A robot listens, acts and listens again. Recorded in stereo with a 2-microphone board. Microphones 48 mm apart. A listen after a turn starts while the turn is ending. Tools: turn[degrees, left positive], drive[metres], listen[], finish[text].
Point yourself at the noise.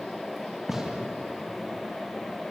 Action: turn[-30]
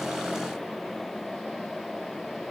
Action: listen[]
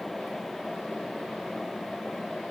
Action: finish[I heard a gunshot, but can't make it out now. It was about 20° left or 140° right.]